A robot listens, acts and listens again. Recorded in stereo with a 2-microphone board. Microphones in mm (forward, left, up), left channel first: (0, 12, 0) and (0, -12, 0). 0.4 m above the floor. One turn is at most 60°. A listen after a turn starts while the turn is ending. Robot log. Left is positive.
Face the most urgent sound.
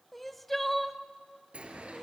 cmd yaw +30
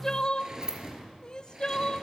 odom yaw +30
note: So it is at 140° left.
cmd yaw +60
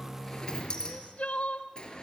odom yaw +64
note: The crying is now 75° left.
cmd yaw +60
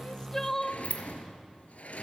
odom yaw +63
note: The crying is now 15° left.
cmd yaw +15
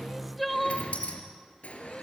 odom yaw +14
end: Found it: crying, straight ahead, under 1 m away.